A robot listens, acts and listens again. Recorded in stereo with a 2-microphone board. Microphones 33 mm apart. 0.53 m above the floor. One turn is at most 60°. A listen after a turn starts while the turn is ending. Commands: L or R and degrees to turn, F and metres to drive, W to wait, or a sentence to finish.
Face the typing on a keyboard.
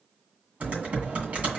R50
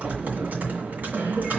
R60
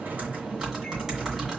R20
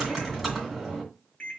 Found it: typing on a keyboard, straight ahead, 2 to 4 m away.